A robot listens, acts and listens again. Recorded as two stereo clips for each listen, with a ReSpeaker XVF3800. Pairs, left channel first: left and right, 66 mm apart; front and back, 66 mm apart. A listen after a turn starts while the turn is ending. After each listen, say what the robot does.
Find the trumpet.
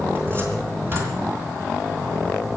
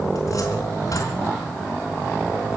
Keep listening.
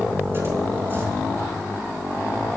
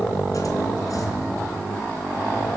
Keep listening.
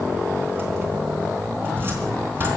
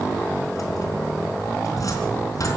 I can't make out a trumpet to turn to.